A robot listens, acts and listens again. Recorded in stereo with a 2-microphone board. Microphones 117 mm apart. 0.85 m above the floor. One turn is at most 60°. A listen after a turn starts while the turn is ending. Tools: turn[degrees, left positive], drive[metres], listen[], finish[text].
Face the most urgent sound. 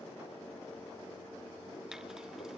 Action: listen[]
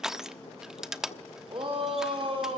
Thought: The shout: about 50° right or 130° right.
Action: turn[-50]
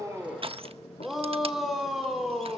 Action: finish[Found it: a shout, straight ahead.]